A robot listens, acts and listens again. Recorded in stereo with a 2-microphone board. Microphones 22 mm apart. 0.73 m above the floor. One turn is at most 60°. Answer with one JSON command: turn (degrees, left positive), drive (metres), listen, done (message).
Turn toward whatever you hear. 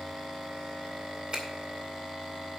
{"turn": -55}
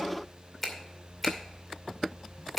{"done": "Found it: a finger snap, straight ahead."}